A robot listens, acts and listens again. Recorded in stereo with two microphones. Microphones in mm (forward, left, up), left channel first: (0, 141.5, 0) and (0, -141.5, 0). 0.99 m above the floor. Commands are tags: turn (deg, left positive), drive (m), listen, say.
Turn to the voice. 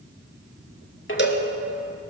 <listen/>
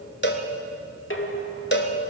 <listen/>
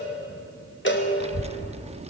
<turn deg="-25"/>
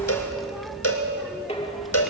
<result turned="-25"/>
<say>Facing the child speaking, under 1 m away.</say>